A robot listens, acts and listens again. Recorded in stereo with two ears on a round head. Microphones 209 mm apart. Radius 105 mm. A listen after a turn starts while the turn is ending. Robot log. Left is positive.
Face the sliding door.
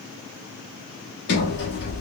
note: The sliding door: about 50° left or 130° left.
cmd yaw +50
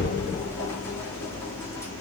note: So it is at 15° left.
cmd yaw +15
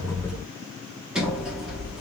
end: Found it: a sliding door, straight ahead.